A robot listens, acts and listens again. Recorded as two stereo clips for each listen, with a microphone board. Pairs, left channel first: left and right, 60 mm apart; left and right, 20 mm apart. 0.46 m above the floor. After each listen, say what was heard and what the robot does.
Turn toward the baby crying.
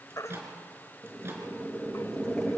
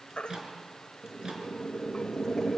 The baby crying: about 65° left or 115° left. Turn 65° left.
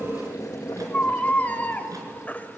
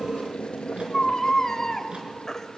So it is at 30° left. Turn 30° left.
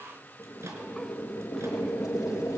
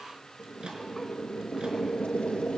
Keep listening.
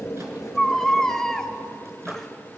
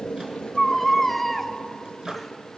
The baby crying is now 10° left. Turn 10° left.
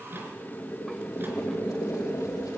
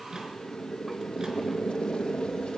Keep listening.
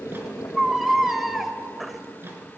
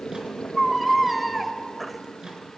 Facing the baby crying.